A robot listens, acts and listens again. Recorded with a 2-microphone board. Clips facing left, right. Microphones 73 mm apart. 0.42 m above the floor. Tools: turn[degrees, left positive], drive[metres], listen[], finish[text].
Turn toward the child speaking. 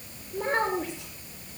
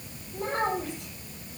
Action: turn[90]
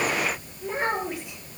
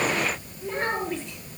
Thought: So it is at 10° left.
Action: turn[10]
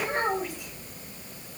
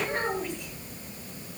Action: finish[Facing the child speaking, over 4 m away.]